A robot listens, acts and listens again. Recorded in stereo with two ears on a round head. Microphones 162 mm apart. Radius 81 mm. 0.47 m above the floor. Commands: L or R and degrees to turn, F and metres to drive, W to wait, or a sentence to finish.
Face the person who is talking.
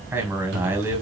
R30
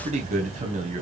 R135
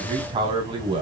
R30
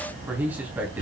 R10
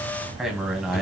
Found it: a man speaking, straight ahead, 2 to 4 m away.